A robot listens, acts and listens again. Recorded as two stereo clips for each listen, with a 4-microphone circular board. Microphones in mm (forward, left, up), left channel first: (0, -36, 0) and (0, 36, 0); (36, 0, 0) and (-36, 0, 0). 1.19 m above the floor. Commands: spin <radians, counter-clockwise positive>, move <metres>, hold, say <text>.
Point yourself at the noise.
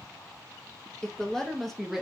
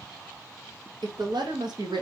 spin 3.05
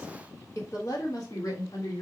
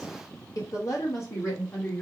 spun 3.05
spin -0.96
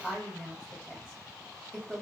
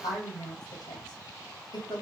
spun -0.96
say Found it: a woman speaking, straight ahead.